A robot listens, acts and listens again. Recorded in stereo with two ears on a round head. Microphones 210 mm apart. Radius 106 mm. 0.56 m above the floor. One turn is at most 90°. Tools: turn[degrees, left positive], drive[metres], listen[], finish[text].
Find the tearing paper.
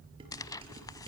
Thought: The tearing paper: about 15° left or 165° left.
Action: turn[15]
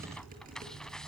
Action: finish[Facing the tearing paper.]